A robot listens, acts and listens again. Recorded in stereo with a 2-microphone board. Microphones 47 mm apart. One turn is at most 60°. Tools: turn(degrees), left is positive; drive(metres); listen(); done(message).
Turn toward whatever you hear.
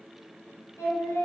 turn(degrees=60)
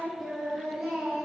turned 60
turn(degrees=-10)
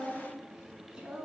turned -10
turn(degrees=-20)
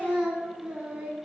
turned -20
turn(degrees=-30)
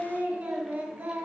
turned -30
turn(degrees=-30)
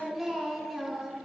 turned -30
done("Facing the singing, 1 to 2 m away.")